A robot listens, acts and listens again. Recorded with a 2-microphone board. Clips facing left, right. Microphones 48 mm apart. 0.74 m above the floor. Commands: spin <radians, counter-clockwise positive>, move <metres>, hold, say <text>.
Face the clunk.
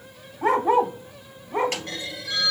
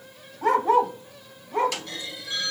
spin 0.70
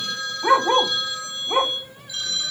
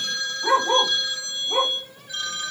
hold
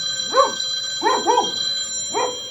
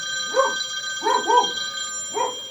say I heard a clunk, but can't make it out now. It was about straight ahead or 100° left.